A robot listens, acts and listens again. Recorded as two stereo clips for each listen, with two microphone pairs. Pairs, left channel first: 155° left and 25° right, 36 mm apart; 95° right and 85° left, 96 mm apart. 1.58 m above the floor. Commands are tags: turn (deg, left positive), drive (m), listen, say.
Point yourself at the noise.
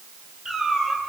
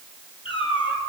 <turn deg="-100"/>
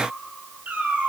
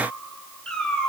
<turn deg="-15"/>
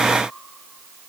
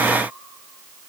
<listen/>
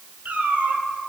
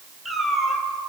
<say>Found it: a cat meowing, straight ahead.</say>